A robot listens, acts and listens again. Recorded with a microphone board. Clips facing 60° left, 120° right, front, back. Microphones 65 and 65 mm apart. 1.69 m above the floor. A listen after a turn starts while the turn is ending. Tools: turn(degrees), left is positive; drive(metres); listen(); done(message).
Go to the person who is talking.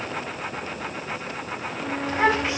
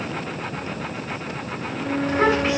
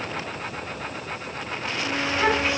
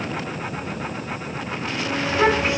turn(degrees=-160)
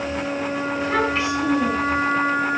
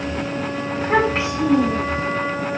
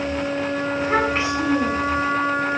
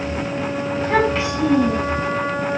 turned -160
turn(degrees=-60)
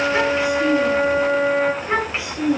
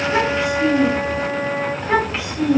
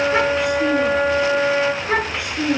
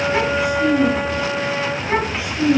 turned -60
turn(degrees=-20)
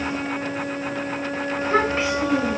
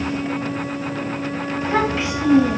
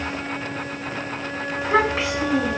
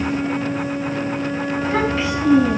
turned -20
drive(metres=1.0)
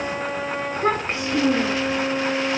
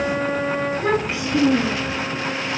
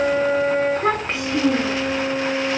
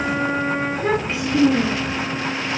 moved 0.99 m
turn(degrees=10)
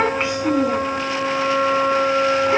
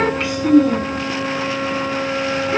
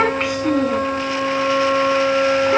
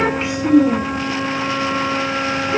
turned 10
drive(metres=1.0)
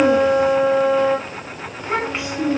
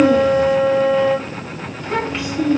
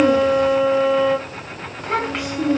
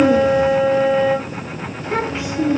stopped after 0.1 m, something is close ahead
done("Arrived at the child speaking, straight ahead.")